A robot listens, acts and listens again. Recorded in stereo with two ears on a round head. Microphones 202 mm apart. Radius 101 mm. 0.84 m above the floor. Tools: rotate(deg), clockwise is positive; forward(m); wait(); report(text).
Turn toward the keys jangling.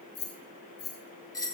rotate(-60)
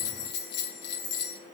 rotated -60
rotate(-50)
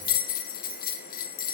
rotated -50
wait()
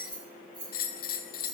rotate(25)
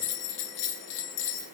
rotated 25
wait()
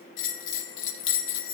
wait()
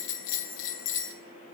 report("Facing where the keys jangling came from. I can't hear it now.")